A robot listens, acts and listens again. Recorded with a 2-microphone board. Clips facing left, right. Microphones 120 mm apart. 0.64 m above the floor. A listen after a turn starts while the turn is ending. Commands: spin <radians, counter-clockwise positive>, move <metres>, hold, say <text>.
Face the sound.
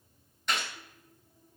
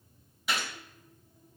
spin -0.52
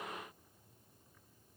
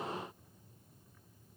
hold
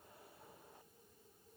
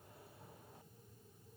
say I heard a gunshot, but can't make it out now. It was about 25° left or 145° right.